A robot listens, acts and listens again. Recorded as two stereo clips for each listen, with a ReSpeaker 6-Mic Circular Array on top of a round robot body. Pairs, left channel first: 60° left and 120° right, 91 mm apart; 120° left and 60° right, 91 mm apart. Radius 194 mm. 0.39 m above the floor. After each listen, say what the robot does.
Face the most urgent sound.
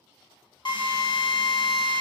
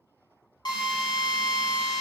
Keep listening.
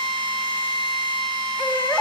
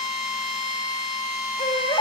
Turn 135° left.
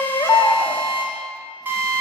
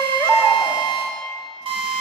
Facing the baby crying, 1 to 2 m away.